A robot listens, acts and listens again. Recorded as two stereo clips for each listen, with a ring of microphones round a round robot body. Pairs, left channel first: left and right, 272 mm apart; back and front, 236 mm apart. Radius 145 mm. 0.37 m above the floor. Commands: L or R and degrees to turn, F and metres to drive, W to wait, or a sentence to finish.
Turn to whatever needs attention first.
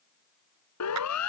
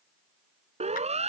L65
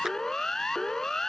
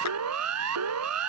Facing the siren.